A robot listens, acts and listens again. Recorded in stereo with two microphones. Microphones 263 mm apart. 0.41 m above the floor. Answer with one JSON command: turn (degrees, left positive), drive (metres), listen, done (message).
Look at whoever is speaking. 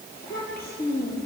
{"turn": 35}
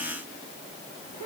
{"turn": 110}
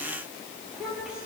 {"done": "Found it: a child speaking, straight ahead."}